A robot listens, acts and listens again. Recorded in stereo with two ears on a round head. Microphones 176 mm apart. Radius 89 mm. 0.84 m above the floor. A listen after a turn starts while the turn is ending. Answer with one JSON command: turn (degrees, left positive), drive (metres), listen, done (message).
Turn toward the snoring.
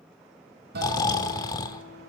{"turn": 20}
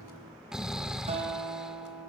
{"done": "Found it: snoring, straight ahead, 1 to 2 m away."}